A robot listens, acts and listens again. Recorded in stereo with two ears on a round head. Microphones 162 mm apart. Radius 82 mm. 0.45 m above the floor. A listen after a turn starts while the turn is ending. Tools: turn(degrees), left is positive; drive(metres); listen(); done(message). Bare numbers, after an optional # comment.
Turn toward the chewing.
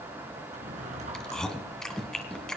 turn(30)
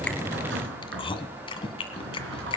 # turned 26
# So it is at 150° left.
turn(150)
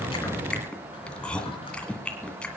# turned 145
done("Found it: chewing, straight ahead.")